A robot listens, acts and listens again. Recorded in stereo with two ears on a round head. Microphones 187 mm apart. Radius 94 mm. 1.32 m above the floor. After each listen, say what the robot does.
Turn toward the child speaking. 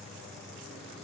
Keep listening.
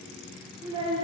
Turn 30° right.
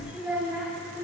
Turn 30° right.
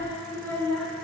Found it: a child speaking, straight ahead, 2 to 4 m away.